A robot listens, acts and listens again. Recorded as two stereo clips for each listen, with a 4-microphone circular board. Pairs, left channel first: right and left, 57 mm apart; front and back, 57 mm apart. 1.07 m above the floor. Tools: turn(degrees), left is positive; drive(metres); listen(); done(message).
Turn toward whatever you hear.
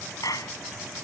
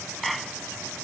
turn(degrees=-90)
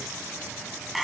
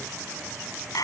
done("Facing the clap.")